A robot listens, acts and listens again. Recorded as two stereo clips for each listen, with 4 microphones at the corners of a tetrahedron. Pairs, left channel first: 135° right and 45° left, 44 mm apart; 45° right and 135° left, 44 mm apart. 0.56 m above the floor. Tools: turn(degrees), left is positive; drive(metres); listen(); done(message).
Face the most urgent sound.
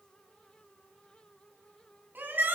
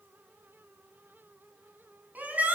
turn(degrees=85)
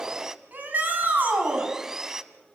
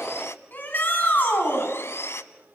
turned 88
done("Facing the shout.")